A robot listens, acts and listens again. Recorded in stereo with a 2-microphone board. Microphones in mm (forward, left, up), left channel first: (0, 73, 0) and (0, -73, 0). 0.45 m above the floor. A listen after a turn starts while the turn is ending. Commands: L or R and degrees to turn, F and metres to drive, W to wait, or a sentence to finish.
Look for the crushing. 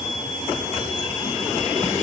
W
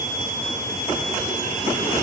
W
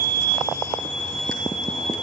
I can't make out crushing to turn to.